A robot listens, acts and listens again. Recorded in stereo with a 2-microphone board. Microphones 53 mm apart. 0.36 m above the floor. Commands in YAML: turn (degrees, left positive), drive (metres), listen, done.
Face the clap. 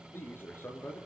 listen: true
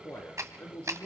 turn: -70
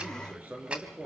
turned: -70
turn: -20
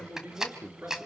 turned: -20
turn: -10
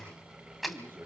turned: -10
done: "Facing the clap."